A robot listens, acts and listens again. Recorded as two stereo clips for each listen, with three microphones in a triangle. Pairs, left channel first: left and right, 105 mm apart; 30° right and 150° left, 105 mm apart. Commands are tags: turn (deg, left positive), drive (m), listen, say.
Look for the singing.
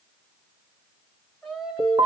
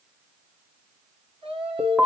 <turn deg="180"/>
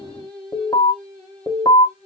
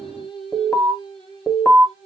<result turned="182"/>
<turn deg="10"/>
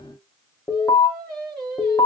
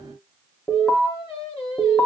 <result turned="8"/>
<say>Facing the singing, over 4 m away.</say>